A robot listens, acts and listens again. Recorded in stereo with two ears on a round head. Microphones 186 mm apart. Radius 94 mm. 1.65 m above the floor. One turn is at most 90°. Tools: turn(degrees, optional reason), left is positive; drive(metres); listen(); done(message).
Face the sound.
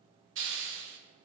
turn(degrees=-60, reason="The hiss: about 60° right or 120° right.")
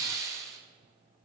turn(degrees=-15, reason="So it is at 15° right.")
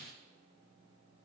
listen()
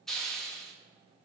done("Facing the hiss.")